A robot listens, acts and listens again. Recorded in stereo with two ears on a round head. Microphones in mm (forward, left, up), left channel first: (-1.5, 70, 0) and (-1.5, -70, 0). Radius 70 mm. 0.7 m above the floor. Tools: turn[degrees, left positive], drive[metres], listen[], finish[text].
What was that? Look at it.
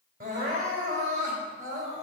Thought: The crying: about 60° right or 120° right.
Action: turn[-60]
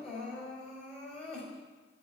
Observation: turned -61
Action: finish[Found it: crying, straight ahead, over 4 m away.]